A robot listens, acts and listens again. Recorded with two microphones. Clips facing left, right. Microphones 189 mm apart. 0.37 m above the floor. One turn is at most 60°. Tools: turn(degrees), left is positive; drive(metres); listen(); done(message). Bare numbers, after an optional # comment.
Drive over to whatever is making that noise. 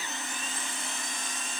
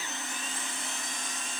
listen()
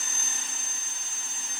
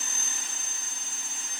listen()
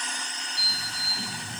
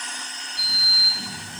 # The sliding door: about 25° right or 155° right.
turn(-25)
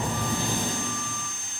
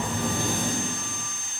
# So it is at 125° right.
turn(-60)
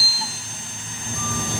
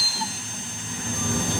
# The sliding door is now 60° right.
turn(-60)
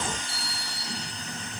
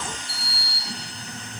drive(1.0)
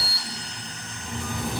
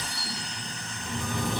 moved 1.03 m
# The sliding door is now 10° left.
turn(10)
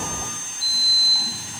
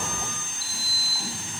drive(1.0)
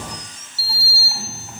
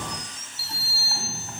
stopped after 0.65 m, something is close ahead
# The sliding door is now 10° left.
turn(10)
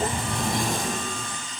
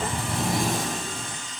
done("I am next to the sliding door.")